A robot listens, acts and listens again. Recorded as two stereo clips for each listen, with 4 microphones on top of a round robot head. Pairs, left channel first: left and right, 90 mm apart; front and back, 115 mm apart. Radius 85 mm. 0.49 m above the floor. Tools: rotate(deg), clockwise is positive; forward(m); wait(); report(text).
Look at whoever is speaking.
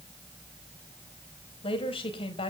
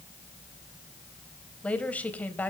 rotate(-70)
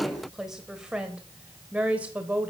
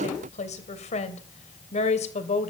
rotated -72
rotate(15)
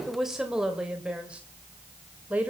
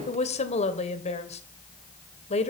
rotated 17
rotate(15)
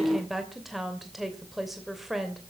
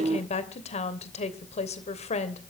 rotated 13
report("Facing the woman speaking, 2 to 4 m away.")